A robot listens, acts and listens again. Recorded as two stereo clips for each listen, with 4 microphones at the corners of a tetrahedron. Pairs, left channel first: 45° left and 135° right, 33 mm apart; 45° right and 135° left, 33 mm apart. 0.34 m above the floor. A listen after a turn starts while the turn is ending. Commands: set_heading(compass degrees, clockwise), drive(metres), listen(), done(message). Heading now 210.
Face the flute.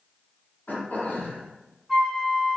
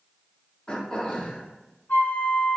set_heading(250)
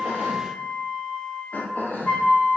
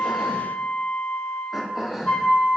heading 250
done("Found it: a flute, straight ahead.")